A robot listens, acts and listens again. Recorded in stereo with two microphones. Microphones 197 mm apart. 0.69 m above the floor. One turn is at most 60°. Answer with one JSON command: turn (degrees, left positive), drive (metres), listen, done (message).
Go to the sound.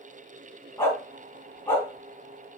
{"turn": 30}
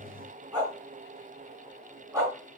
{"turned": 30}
{"turn": -20}
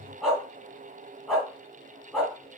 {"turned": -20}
{"drive": 1.0}
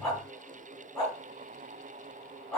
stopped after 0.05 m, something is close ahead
{"done": "Something is in my way. I am facing the dog barking but have not reached it."}